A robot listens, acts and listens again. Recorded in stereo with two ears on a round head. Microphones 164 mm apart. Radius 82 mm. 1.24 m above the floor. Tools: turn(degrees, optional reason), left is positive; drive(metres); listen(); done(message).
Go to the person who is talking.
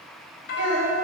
turn(degrees=-90)
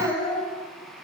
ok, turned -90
turn(degrees=10, reason="So it is at 10° left.")
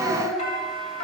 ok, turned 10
drive(metres=1.0)
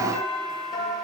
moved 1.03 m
listen()
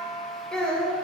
drive(metres=1.0)
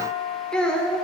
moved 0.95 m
drive(metres=1.0)
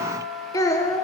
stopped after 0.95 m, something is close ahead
turn(degrees=20, reason="The child speaking is now 20° left.")
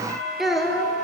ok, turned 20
done("Arrived at the child speaking, straight ahead.")